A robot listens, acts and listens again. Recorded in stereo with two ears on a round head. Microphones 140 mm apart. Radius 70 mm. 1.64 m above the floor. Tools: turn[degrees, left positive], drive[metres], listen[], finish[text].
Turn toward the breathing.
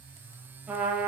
Action: listen[]
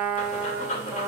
Thought: The breathing: about 50° left or 130° left.
Action: turn[50]
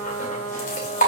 Thought: So it is at 65° left.
Action: turn[65]
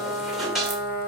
Action: finish[Found it: breathing, straight ahead, 2 to 4 m away.]